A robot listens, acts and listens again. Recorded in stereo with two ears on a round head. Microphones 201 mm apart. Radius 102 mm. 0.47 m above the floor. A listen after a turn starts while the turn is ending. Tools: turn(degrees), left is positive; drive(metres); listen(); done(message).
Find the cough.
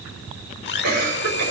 turn(degrees=-40)
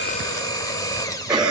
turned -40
done("Facing the cough, over 4 m away.")